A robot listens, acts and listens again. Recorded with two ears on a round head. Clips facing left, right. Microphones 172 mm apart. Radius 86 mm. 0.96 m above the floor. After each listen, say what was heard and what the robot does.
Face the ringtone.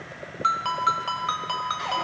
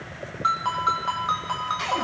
The ringtone: about 35° left or 145° left. Turn 35° left.
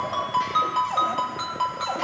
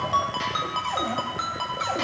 Found it: a ringtone, straight ahead.